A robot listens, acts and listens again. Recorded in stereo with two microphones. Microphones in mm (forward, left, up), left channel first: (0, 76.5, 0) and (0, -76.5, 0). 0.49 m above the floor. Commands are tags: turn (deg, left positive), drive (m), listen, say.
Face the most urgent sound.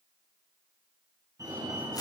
<turn deg="-25"/>
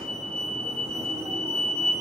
<turn deg="-130"/>
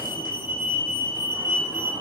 <turn deg="-15"/>
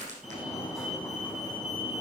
<say>Found it: a fire alarm, straight ahead.</say>